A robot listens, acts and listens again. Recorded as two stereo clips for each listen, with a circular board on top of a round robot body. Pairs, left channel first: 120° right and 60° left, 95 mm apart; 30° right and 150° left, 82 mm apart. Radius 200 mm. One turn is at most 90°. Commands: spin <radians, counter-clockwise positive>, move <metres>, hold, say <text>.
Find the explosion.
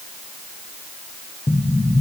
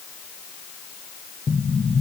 spin -1.22
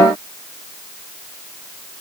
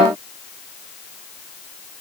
say Facing where the explosion came from. I can't hear it now.